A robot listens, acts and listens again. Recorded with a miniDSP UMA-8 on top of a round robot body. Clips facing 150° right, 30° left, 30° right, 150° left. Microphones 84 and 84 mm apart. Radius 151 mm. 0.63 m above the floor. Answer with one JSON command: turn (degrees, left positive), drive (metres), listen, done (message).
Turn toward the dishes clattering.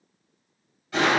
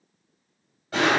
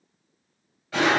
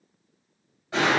{"listen": true}
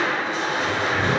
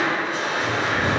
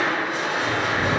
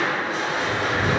{"listen": true}
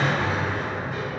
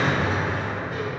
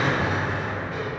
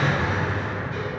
{"done": "I can't make out dishes clattering to turn to."}